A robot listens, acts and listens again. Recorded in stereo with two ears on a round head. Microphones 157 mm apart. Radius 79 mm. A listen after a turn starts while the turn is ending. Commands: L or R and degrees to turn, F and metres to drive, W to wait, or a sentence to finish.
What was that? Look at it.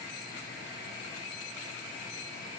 W
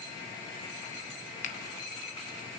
L45
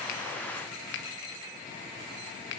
L85
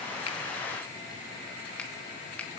W
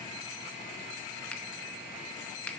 L10
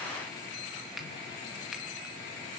W
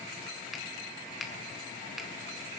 Found it: a finger snap, straight ahead, under 1 m away.